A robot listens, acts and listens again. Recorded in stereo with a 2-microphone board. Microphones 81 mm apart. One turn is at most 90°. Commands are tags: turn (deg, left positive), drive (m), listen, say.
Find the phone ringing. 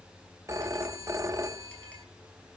<turn deg="-40"/>
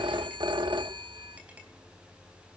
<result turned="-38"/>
<turn deg="-90"/>
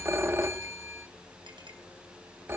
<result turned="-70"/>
<turn deg="-30"/>
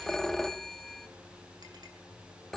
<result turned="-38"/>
<say>Found it: a phone ringing, straight ahead.</say>